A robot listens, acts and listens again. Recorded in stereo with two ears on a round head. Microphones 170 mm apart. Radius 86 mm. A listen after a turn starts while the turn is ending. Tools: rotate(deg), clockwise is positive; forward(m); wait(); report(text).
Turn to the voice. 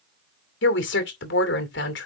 rotate(-65)
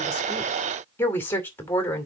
rotate(-10)
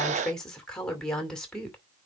report("Facing the woman speaking.")